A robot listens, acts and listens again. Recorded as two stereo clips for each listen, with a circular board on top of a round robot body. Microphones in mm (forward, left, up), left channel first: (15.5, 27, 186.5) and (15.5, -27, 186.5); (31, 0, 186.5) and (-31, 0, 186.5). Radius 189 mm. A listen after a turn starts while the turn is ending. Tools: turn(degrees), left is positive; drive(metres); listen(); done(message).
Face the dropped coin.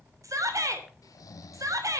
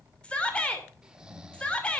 listen()
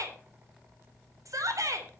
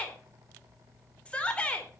listen()
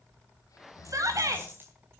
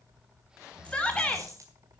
turn(degrees=-140)
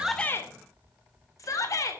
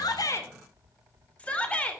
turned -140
done("I heard a dropped coin from this way, but can't make it out now.")